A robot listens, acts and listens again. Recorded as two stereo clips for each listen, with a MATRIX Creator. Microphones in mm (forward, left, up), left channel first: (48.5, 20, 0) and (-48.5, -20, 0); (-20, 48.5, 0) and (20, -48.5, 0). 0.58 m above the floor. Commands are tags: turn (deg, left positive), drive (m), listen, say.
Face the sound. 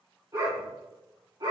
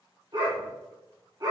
<turn deg="-115"/>
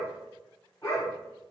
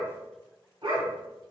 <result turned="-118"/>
<turn deg="-35"/>
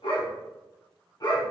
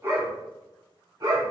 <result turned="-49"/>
<turn deg="-25"/>
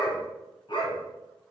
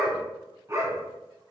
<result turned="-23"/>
<turn deg="-10"/>
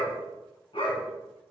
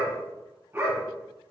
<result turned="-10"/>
<say>Found it: a dog barking, straight ahead.</say>